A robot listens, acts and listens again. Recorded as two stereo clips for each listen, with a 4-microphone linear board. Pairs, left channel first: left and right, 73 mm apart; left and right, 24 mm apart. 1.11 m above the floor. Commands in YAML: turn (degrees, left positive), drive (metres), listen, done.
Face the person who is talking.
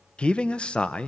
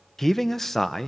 turn: 30
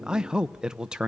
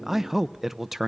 turn: -10
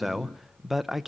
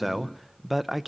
done: "Found it: a man speaking, straight ahead."